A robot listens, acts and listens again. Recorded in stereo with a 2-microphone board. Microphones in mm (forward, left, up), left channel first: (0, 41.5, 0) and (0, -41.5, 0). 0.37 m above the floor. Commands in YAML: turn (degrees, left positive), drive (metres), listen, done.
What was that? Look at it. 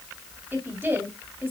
turn: -25
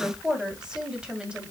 turn: -30
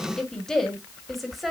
done: "Facing the woman speaking."